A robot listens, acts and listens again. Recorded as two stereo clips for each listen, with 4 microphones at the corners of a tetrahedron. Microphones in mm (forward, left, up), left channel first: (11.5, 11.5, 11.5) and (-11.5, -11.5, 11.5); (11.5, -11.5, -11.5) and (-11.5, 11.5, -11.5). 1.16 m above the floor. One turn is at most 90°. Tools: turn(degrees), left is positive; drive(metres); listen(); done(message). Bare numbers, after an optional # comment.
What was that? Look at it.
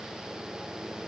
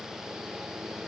listen()
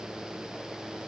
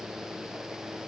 listen()
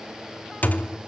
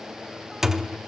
# The thud: 60° left.
turn(60)
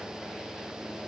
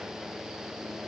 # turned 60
done("I heard a thud from this way, but can't make it out now.")